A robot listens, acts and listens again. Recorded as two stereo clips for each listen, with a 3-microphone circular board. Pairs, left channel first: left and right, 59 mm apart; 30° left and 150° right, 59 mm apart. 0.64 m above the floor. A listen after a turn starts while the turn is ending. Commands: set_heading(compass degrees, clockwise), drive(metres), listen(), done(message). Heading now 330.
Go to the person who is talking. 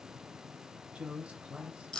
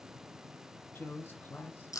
set_heading(350)
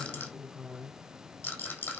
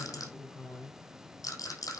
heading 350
drive(1.0)
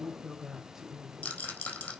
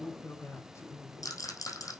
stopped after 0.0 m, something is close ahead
set_heading(0)
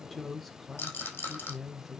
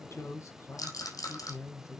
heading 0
done("Blocked. The woman speaking is further on, straight ahead.")